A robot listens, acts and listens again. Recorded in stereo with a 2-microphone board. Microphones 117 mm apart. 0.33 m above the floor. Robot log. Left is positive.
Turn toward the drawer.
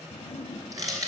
cmd yaw +90
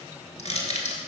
cmd idle
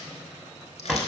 end: Facing the drawer.